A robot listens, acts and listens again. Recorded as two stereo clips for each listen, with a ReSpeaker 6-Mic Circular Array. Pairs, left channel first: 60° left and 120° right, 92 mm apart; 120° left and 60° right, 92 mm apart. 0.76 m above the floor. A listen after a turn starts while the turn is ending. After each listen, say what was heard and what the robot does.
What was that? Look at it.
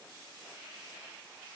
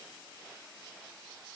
Keep listening.
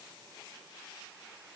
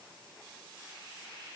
Keep listening.
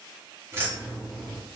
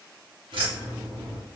The keys jangling: 45° right. Turn 45° right.
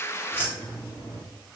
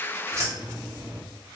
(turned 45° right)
The keys jangling is now 10° left. Turn 10° left.
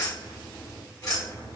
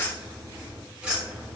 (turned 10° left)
The keys jangling is now 20° left. Turn 20° left.
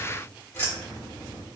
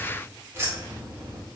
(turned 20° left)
Facing the keys jangling.